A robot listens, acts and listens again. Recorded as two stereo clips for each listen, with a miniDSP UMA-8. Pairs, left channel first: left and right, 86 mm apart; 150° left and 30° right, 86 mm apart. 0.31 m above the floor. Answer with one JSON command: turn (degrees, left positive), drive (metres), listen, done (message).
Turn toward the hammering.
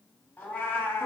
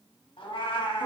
{"listen": true}
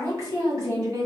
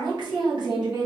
{"listen": true}
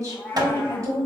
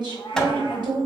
{"turn": -125}
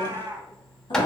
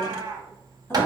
{"turn": 10}
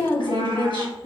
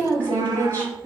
{"listen": true}
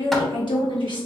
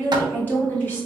{"listen": true}
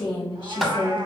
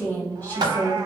{"done": "Found it: hammering, straight ahead."}